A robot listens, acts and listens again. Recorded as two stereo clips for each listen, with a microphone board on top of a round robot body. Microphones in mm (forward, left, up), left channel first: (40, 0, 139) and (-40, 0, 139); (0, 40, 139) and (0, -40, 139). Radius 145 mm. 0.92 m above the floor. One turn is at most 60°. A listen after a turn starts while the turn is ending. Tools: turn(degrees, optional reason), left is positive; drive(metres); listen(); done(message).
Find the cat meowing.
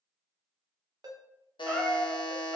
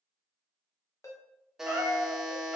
turn(degrees=-60, reason="The cat meowing: 165° right.")
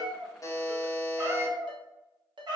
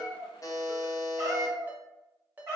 turn(degrees=-60, reason="The cat meowing is now 145° right.")
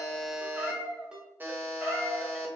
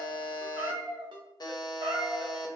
turn(degrees=-60, reason="The cat meowing is now 105° right.")
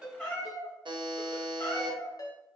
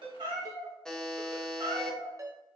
turn(degrees=-50, reason="The cat meowing is now 50° right.")
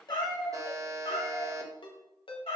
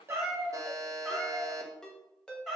done("Facing the cat meowing, 2 to 4 m away.")